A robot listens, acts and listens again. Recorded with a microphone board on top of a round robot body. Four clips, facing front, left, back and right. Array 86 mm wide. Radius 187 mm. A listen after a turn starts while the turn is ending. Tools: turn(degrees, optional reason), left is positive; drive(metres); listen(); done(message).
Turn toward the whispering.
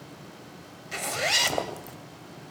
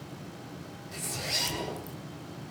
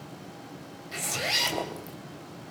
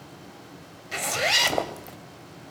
turn(degrees=-120, reason="The whispering: 120° right.")
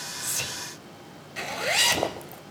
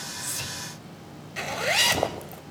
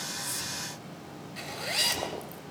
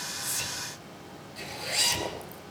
listen()
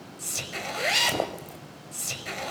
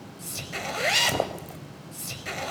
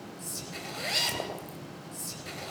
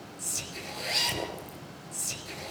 turn(degrees=10, reason="The whispering is now 10° left.")
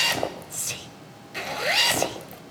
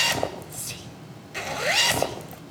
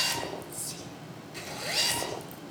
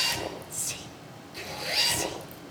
done("Found it: whispering, straight ahead.")